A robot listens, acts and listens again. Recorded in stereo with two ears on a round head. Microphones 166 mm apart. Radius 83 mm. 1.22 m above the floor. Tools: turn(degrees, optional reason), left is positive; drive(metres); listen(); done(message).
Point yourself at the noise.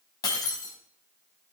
turn(degrees=20, reason="The breaking glass: about 20° left or 160° left.")
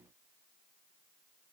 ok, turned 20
listen()
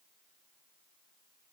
done("I heard breaking glass, but can't make it out now. It was about straight ahead or 140° left.")